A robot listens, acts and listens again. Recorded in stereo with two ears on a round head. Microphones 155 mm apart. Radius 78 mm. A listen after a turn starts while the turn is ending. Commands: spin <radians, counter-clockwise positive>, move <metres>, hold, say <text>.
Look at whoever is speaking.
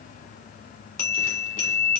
hold
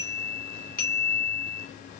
hold
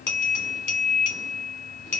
say I can't make out anyone speaking to turn to.